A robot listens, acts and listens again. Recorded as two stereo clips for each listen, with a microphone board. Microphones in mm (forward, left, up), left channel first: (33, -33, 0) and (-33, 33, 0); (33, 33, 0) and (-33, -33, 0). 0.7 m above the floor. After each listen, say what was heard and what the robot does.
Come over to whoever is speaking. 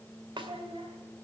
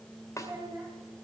The child speaking: 165° left. Turn 165° left.
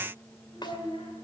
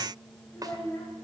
The child speaking is now 20° right. Turn 20° right.
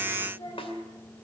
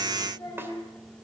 Drive 1.0 m forward.
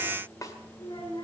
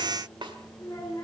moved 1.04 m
Drive 1.0 m forward.
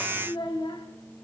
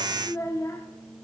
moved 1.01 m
The child speaking is now 15° right. Turn 15° right.
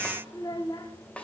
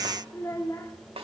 Drive 1.0 m forward.
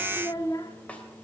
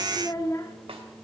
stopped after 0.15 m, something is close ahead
Arrived at the child speaking, straight ahead.